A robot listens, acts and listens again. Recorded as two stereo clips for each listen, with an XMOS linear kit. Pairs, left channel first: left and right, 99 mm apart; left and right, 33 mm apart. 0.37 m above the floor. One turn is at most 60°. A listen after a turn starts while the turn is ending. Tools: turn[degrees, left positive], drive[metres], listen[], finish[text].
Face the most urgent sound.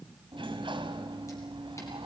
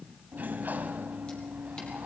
Action: listen[]
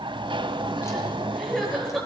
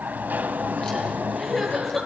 Action: turn[30]
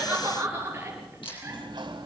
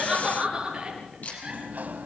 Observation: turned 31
Thought: So it is at 25° right.
Action: turn[-25]
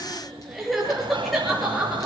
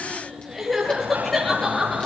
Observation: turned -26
Action: finish[Facing the crying.]